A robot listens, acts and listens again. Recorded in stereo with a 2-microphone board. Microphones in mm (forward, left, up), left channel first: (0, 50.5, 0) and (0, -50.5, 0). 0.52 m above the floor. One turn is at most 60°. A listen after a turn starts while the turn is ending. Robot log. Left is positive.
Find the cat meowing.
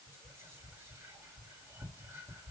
cmd idle
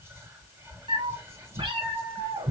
note: The cat meowing: about 65° right or 115° right.
cmd yaw -60
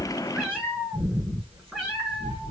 note: So it is at 10° right.
cmd yaw -10
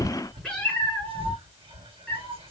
end: Found it: a cat meowing, straight ahead, over 4 m away.